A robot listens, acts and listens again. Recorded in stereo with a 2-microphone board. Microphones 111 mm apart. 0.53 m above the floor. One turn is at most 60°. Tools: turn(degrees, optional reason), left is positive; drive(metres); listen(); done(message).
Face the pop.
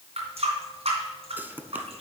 turn(degrees=-15, reason="The pop: about 15° right or 165° right.")
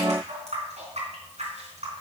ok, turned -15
listen()
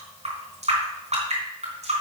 done("I heard a pop, but can't make it out now. It was about straight ahead or 150° right.")